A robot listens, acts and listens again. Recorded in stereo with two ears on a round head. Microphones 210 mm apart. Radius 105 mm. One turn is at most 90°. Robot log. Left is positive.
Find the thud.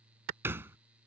cmd yaw -30
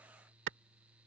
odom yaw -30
cmd idle
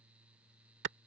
end: I heard a thud, but can't make it out now. It was about 20° left or 140° right.